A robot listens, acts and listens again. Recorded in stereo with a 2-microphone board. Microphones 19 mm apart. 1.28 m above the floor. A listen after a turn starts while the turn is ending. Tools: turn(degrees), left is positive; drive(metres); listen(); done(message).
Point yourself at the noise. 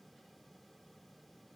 listen()
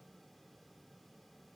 listen()
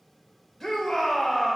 turn(degrees=30)
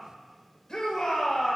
turn(degrees=140)
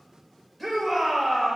turn(degrees=10)
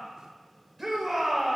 done("Found it: a shout, straight ahead, over 4 m away.")